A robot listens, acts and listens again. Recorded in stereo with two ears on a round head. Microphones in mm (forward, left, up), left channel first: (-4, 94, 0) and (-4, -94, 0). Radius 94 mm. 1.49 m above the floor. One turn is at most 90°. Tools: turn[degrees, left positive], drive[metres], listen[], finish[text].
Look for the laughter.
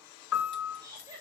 Thought: The laughter: about 15° right or 165° right.
Action: turn[-15]
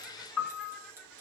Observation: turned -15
Action: listen[]
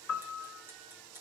Action: listen[]
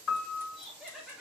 Action: finish[Found it: laughter, straight ahead, 2 to 4 m away.]